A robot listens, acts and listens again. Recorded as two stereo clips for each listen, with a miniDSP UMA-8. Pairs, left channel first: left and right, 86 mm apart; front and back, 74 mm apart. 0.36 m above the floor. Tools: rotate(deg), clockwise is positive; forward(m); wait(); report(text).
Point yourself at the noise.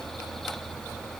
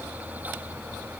wait()
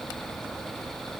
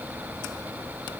wait()
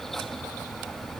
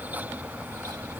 report("I can't make out anything.")